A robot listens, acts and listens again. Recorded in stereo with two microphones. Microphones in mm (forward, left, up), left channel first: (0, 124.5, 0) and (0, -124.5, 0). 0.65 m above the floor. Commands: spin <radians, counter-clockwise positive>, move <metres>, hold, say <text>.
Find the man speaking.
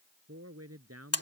spin -1.31
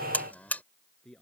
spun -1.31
say Found it: a man speaking, straight ahead.